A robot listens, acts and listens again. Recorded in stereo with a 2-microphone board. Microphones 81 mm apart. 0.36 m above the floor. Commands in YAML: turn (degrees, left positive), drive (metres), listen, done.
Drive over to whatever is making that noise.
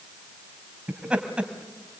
turn: -30
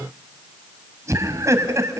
turn: -135
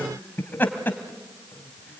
turn: 25
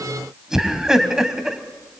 turn: -10
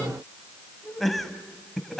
drive: 1.0
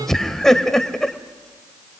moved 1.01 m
drive: 1.0
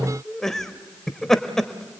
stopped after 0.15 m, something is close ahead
done: "Arrived at the laughter, straight ahead."